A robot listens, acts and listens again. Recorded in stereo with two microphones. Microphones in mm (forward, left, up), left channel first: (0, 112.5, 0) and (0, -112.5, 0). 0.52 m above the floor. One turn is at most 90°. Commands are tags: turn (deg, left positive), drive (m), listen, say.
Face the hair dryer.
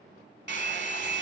<turn deg="-50"/>
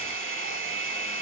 <turn deg="-75"/>
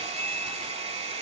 <turn deg="-30"/>
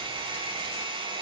<turn deg="-25"/>
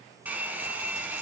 <turn deg="-10"/>
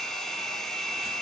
<say>Found it: a hair dryer, straight ahead, under 1 m away.</say>